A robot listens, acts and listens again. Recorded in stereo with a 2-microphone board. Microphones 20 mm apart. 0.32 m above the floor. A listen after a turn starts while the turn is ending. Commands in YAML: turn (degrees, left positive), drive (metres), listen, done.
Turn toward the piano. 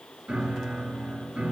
turn: -70
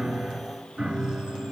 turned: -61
turn: -45
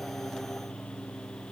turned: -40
done: "Found it: a piano, straight ahead."